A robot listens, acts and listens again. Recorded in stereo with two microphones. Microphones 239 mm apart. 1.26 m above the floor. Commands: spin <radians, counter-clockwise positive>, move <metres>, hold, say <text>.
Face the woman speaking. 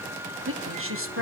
spin -1.05
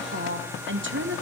spin -0.96
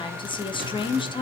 spin 0.35
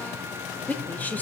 say Facing the woman speaking.